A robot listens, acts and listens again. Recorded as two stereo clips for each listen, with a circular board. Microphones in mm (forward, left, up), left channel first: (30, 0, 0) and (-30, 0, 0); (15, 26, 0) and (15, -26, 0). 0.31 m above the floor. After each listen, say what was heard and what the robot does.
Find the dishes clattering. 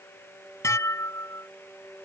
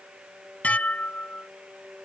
The dishes clattering: 30° left. Turn 30° left.
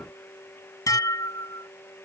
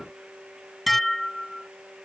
Found it: dishes clattering, straight ahead.